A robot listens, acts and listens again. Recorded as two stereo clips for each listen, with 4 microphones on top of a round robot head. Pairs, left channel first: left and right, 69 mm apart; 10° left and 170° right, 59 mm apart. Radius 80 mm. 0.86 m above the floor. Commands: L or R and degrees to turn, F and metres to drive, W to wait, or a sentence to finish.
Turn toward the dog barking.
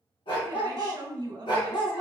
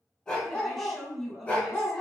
L75
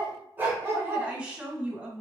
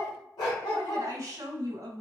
R35
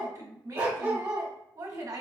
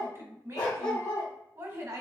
R35
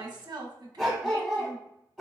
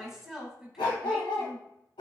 Facing the dog barking.